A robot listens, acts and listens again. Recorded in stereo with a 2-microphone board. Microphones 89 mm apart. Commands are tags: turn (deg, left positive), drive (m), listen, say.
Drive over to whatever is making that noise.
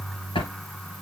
<turn deg="90"/>
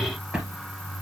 <turn deg="-10"/>
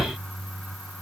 <drive m="1.0"/>
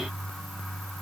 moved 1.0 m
<listen/>
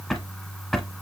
<drive m="1.0"/>
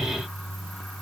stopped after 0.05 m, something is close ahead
<listen/>
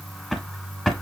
<say>I am next to the drawer.</say>